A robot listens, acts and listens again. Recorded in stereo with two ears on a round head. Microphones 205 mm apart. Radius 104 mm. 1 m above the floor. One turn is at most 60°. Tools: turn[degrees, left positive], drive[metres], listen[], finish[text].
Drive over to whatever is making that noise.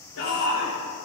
Thought: The shout: about 75° left or 105° left.
Action: turn[60]
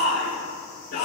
Thought: So it is at 45° left.
Action: turn[45]
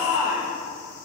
Thought: The shout is now 10° right.
Action: turn[-10]
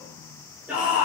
Action: drive[1.0]
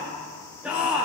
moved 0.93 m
Action: drive[1.0]
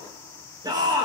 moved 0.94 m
Thought: The shout is now 20° right.
Action: turn[-20]
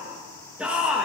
Action: drive[1.0]
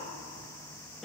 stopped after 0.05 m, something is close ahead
Action: finish[I am next to the shout.]